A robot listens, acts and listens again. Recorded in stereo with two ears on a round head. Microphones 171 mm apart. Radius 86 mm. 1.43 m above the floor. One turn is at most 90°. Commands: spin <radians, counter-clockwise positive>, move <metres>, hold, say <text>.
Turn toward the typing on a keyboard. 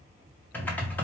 spin 0.52
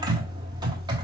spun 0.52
spin -0.44
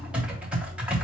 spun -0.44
say Found it: typing on a keyboard, straight ahead, 1 to 2 m away.